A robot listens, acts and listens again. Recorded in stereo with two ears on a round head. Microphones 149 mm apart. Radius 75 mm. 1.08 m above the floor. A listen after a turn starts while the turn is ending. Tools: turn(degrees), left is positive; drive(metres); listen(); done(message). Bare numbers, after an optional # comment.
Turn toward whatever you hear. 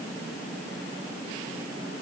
listen()
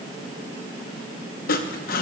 # The sawing: about 55° left or 125° left.
turn(55)
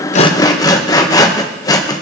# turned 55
# So it is at 25° left.
turn(25)
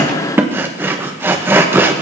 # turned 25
# The sawing is now 15° right.
turn(-15)
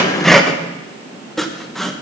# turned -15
done("Facing the sawing.")